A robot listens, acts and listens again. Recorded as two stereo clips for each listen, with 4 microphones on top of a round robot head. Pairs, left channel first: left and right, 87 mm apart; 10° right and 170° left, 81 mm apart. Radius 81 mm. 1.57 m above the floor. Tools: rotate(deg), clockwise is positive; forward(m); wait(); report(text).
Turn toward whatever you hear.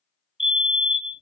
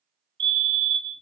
rotate(-180)
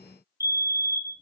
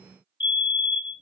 rotate(35)
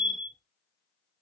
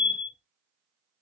rotate(10)
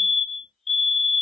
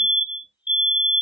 report("Facing the fire alarm, 2 to 4 m away.")